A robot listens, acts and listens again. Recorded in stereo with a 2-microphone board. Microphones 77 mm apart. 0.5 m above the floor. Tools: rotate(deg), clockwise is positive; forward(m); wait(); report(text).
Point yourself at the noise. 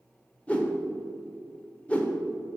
rotate(-15)
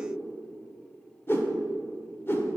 rotate(-150)
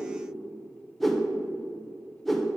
report("Found it: a whoosh, straight ahead.")